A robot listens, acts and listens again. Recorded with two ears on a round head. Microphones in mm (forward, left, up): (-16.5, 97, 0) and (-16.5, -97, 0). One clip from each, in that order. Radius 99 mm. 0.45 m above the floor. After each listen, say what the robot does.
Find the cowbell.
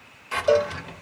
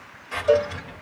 Turn 60° left.
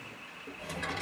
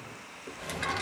Keep listening.
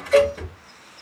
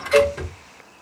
Facing the cowbell, 1 to 2 m away.